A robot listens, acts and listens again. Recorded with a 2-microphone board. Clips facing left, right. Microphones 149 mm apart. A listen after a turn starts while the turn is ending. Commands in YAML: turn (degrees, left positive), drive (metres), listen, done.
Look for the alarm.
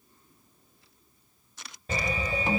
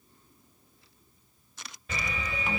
turn: 40
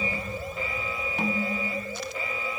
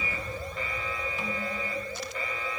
turn: 10
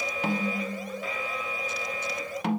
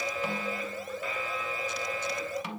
done: "Found it: an alarm, straight ahead, 1 to 2 m away."